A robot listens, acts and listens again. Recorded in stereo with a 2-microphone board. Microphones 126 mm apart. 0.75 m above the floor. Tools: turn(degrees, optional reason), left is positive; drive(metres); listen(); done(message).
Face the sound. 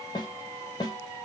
turn(degrees=35, reason="The snare drum: about 35° left or 145° left.")
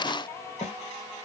turn(degrees=110, reason="So it is at 110° left.")
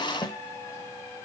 turn(degrees=30, reason="The snare drum is now 30° left.")
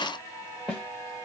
turn(degrees=10, reason="The snare drum is now 10° left.")
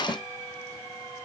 listen()
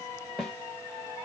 done("Facing the snare drum, 1 to 2 m away.")